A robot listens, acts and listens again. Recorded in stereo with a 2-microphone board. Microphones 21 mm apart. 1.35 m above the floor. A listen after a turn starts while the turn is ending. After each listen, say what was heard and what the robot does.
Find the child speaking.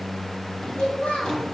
Turn 90° left.
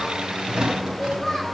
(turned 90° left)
So it is at 15° right. Turn 15° right.
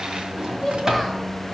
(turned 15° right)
Found it: a child speaking, straight ahead, over 4 m away.